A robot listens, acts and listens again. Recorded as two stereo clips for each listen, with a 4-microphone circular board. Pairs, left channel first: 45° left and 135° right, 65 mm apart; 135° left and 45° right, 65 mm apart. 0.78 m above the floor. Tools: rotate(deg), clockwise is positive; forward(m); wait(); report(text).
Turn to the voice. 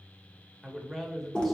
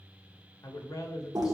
rotate(-135)
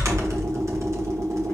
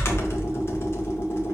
wait()
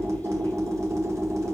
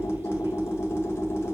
wait()
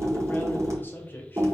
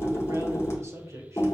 rotate(10)
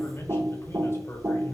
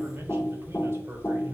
report("Found it: a man speaking, straight ahead.")